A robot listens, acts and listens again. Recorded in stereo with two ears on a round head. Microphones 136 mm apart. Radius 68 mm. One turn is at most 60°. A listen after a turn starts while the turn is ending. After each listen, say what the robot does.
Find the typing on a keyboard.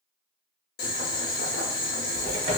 Turn 35° right.
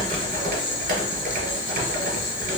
Turn 60° right.
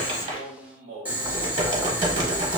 Turn 35° right.
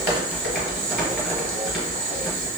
Found it: typing on a keyboard, straight ahead, 1 to 2 m away.